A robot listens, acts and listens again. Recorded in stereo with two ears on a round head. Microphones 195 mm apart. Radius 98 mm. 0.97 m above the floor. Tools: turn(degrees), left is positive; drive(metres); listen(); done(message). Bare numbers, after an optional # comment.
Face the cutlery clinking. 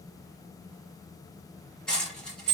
turn(30)
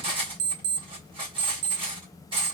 # So it is at 25° right.
turn(-25)
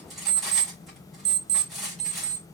done("Found it: cutlery clinking, straight ahead.")